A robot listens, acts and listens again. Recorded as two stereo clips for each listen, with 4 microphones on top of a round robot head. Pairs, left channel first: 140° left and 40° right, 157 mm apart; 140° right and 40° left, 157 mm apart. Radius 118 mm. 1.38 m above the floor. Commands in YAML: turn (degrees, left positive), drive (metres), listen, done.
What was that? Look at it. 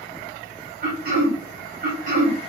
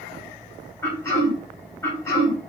turn: -70
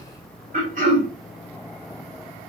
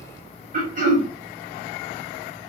done: "Facing the throat clearing, 2 to 4 m away."